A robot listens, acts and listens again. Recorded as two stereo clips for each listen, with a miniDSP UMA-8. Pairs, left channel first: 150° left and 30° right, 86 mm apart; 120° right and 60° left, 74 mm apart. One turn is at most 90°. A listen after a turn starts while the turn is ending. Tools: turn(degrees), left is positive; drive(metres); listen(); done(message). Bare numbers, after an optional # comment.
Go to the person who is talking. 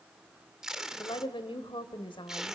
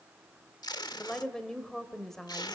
# The woman speaking: 155° left.
turn(90)
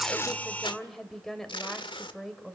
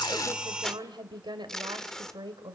# The woman speaking is now 65° left.
turn(65)
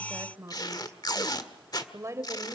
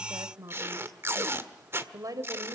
# The woman speaking is now 25° left.
turn(25)
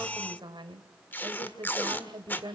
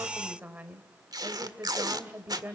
drive(1.0)
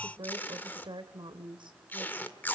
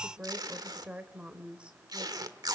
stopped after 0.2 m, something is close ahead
# The woman speaking is now 15° right.
turn(-15)
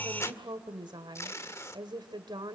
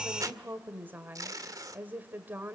done("Blocked. The woman speaking is further on, straight ahead.")